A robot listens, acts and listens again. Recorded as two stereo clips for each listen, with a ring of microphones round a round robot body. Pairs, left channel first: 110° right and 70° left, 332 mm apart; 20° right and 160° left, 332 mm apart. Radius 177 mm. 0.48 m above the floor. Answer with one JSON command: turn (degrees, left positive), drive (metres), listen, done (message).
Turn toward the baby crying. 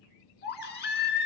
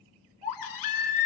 {"turn": -50}
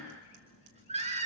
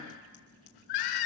{"done": "Found it: a baby crying, straight ahead."}